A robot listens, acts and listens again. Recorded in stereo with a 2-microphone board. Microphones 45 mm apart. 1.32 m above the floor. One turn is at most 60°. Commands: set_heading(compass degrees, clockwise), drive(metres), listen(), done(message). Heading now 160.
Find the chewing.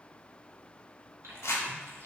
set_heading(220)
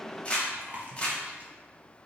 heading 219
set_heading(254)
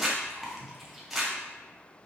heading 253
done("Facing the chewing.")